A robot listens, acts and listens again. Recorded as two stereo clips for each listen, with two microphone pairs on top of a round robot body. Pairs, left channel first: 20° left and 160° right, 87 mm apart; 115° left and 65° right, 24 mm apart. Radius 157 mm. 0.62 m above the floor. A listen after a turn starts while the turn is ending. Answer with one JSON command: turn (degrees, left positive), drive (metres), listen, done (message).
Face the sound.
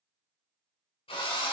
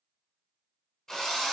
{"turn": 45}
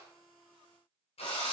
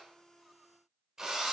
{"done": "Found it: a drill, straight ahead."}